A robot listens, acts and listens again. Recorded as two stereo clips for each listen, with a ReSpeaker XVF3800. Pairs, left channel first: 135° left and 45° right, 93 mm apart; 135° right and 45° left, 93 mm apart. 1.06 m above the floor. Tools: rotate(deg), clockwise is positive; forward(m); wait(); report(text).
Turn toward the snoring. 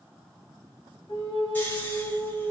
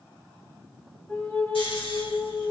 rotate(155)
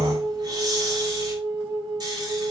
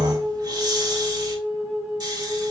report("Found it: snoring, straight ahead.")